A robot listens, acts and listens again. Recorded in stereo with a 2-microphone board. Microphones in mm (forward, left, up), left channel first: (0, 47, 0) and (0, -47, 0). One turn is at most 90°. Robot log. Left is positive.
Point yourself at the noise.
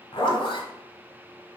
note: The zipper: about 65° left or 115° left.
cmd yaw +65
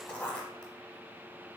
note: So it is at 15° left.
cmd yaw +15
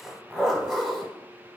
end: Found it: a zipper, straight ahead, under 1 m away.